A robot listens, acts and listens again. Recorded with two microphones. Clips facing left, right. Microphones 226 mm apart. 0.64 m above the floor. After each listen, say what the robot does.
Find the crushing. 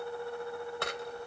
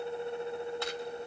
Turn 70° left.
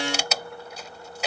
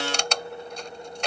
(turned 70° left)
Found it: crushing, straight ahead.